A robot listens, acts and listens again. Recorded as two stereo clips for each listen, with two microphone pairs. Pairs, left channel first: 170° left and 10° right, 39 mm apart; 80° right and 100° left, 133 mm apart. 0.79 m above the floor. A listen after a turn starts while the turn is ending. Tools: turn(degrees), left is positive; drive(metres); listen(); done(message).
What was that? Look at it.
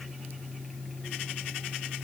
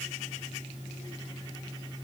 listen()
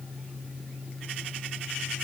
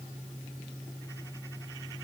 listen()
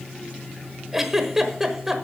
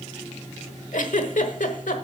turn(degrees=-90)
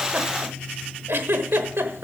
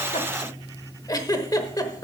turn(degrees=-20)
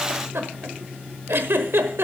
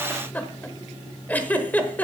done("Facing the giggle.")